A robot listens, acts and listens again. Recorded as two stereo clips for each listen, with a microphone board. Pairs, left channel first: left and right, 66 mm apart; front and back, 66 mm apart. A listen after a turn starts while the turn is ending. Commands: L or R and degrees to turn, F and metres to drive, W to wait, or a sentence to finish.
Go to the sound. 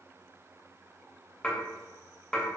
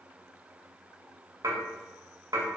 L165
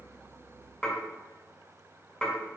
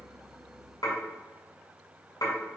L10
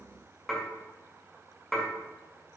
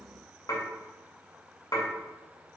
F1.0
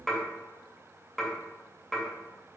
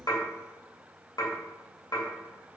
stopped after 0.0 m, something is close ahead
Something is in my way. I am facing the dishes clattering but have not reached it.